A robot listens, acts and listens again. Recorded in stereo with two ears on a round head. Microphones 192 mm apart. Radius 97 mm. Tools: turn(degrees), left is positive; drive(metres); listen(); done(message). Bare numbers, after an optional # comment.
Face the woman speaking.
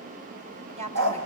# The woman speaking: about 35° right or 145° right.
turn(-35)
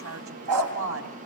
# So it is at 105° right.
turn(-105)
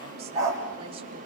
listen()
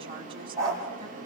listen()
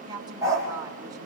# The woman speaking is now 20° right.
turn(-20)
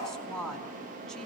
done("Facing the woman speaking.")